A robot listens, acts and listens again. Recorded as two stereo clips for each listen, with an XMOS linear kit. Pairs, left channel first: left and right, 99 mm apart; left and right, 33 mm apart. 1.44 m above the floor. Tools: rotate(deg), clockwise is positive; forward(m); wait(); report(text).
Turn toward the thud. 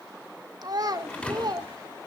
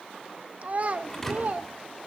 rotate(-30)
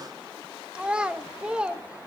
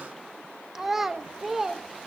wait()
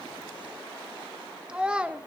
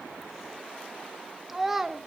report("I heard a thud, but can't make it out now. It was about 20° right or 140° left.")